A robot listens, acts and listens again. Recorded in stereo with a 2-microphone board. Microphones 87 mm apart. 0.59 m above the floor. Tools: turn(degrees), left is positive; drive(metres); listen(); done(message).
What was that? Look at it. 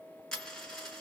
turn(degrees=30)
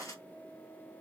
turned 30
turn(degrees=145)
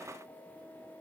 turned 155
turn(degrees=-10)
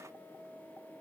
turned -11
done("Facing where the dropped coin came from. I can't hear it now.")